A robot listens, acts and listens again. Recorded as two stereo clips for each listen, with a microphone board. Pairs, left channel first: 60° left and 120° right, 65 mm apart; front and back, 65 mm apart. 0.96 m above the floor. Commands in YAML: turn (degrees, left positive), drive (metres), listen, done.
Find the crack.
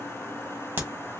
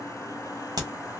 turn: -175
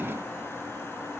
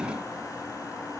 done: "I heard a crack from this way, but can't make it out now."